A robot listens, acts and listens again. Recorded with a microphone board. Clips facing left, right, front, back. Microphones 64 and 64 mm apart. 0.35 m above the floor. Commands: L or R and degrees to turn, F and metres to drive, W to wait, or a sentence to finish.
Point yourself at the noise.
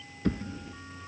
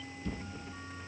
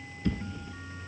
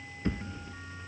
L115
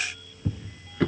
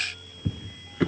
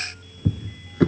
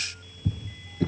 Facing the drawer, 1 to 2 m away.